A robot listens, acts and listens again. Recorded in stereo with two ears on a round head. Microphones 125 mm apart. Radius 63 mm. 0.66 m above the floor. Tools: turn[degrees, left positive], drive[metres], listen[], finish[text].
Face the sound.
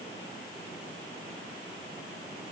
Action: listen[]
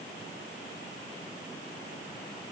Action: listen[]
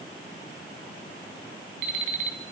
Thought: The alarm clock: about 60° right or 120° right.
Action: turn[-60]
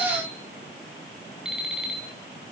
Action: finish[Facing the alarm clock.]